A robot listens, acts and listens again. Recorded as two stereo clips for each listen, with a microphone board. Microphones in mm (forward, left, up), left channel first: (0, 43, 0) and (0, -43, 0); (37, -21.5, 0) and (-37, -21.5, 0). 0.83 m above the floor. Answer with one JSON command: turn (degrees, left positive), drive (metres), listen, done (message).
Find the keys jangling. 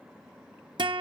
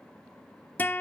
{"listen": true}
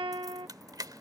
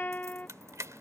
{"turn": -130}
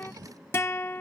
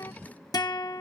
{"listen": true}
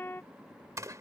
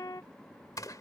{"turn": -40}
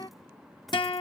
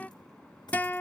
{"listen": true}
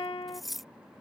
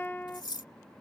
{"done": "Found it: keys jangling, straight ahead."}